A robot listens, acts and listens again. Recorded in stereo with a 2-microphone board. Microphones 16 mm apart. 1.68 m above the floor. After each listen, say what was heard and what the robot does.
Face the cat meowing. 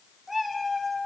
Turn 30° right.
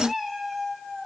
The cat meowing: about 20° right or 160° right. Turn 20° right.
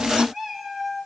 So it is at 155° right. Turn 155° right.
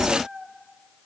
The cat meowing is now 65° right. Turn 65° right.
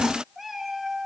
The cat meowing is now 10° right. Turn 10° right.
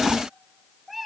Facing the cat meowing, 2 to 4 m away.